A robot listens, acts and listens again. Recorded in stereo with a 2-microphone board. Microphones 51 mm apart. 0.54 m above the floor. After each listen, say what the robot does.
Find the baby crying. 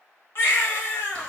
Turn 50° left.
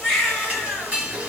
Found it: a baby crying, straight ahead, 1 to 2 m away.